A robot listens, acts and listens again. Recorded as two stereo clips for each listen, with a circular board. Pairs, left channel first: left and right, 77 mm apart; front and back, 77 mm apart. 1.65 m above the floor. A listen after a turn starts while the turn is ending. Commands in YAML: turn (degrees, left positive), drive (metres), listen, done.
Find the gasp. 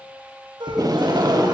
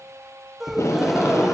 turn: -95
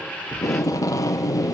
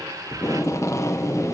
done: "I heard a gasp from this way, but can't make it out now."